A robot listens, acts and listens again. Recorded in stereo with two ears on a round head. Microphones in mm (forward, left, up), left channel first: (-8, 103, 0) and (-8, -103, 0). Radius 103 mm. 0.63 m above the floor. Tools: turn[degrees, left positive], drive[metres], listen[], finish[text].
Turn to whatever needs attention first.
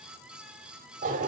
Action: listen[]
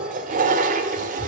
Action: listen[]
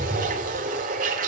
Action: finish[I can't make out anything urgent to turn to.]